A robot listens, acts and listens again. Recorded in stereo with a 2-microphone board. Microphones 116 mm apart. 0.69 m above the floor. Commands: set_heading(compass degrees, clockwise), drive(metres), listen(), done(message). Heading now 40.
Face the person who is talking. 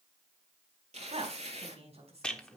set_heading(105)
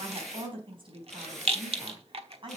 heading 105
set_heading(150)
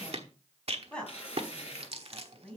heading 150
set_heading(140)
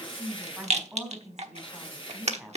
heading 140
done("Facing the woman speaking, over 4 m away.")